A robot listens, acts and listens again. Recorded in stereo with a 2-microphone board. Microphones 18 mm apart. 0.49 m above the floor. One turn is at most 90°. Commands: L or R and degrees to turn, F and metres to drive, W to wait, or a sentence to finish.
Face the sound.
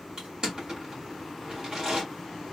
R40
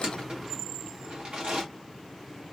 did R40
R90
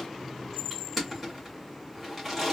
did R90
Facing the crushing, 1 to 2 m away.